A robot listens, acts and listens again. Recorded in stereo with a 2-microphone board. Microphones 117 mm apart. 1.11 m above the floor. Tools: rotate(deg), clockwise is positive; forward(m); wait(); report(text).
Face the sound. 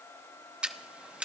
rotate(30)
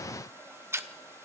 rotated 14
rotate(155)
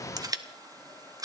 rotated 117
rotate(35)
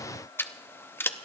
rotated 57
rotate(-20)
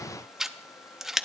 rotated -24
report("Facing the scissors, under 1 m away.")